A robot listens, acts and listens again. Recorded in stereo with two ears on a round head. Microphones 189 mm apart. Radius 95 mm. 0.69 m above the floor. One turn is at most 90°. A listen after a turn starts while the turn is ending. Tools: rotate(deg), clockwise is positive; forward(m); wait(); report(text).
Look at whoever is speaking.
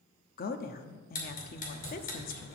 rotate(-45)
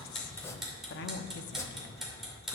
rotate(-80)
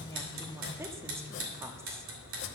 rotate(15)
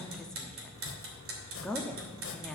report("Found it: a woman speaking, straight ahead, under 1 m away.")